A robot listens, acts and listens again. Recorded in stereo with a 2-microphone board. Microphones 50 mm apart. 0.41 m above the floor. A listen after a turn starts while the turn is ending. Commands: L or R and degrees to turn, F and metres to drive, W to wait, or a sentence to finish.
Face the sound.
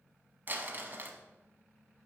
R40
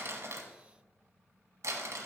R100
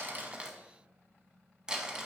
R15
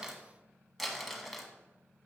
Found it: crumpling, straight ahead.